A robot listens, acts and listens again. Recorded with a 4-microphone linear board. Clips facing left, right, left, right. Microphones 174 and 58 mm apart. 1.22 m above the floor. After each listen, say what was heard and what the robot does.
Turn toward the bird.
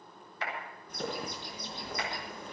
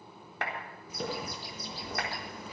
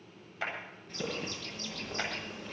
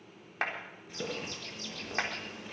Turn 30° right.
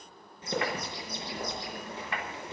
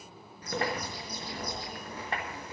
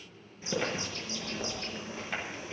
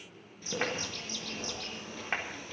So it is at 25° left. Turn 25° left.
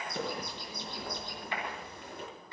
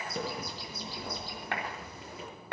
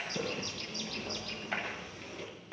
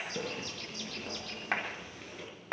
Found it: a bird, straight ahead, over 4 m away.